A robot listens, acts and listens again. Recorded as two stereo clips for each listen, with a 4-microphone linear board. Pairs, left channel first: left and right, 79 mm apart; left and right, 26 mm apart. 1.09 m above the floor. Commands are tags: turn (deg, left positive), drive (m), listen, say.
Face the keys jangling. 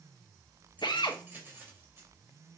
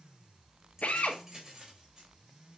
<turn deg="-30"/>
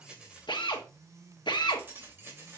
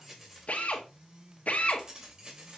<turn deg="-35"/>
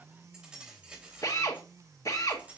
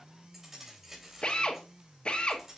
<turn deg="-15"/>
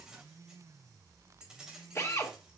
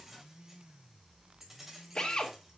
<turn deg="-10"/>
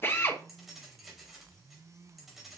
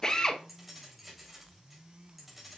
<say>Found it: keys jangling, straight ahead, 2 to 4 m away.</say>